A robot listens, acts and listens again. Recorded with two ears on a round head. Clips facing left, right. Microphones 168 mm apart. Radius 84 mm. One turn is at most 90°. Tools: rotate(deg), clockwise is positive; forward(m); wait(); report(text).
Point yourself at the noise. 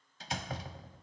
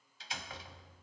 rotate(-40)
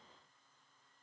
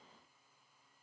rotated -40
wait()
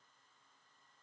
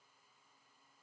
report("I heard a door slam, but can't make it out now. It was about straight ahead or 100° left.")